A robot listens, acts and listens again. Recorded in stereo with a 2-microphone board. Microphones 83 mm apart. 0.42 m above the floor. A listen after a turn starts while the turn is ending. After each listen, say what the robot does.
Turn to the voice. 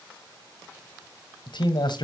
Turn 65° left.
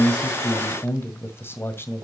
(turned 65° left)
Turn 30° left.
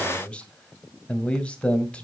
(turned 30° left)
Turn 15° left.
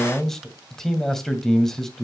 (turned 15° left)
Facing the man speaking, 1 to 2 m away.